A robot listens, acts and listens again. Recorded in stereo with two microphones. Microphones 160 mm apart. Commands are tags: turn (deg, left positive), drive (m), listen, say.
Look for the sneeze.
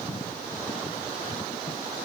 <listen/>
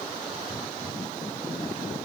<listen/>
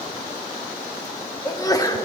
<turn deg="20"/>
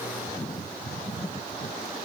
<listen/>
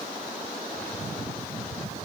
<say>I heard a sneeze, but can't make it out now. It was about straight ahead or 140° left.</say>